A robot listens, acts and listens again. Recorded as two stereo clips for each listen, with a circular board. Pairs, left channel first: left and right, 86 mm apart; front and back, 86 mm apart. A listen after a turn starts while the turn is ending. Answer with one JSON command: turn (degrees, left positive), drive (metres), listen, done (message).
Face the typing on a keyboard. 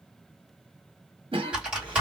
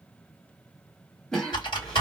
{"turn": -10}
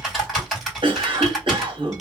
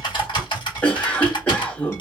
{"done": "Facing the typing on a keyboard."}